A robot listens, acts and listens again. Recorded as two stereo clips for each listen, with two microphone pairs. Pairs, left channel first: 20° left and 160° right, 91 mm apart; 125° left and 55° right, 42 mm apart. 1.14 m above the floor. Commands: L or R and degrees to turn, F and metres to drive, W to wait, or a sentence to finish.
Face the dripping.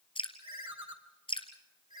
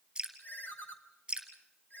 L15
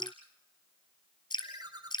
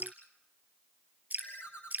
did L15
Found it: dripping, straight ahead, 2 to 4 m away.